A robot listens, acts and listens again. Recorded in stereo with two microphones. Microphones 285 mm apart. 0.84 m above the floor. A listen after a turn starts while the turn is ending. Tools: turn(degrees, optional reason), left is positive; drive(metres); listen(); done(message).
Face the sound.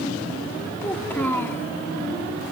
turn(degrees=30)
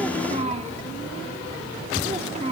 turn(degrees=-25, reason="So it is at 25° right.")
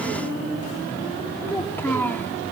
done("Facing the child speaking.")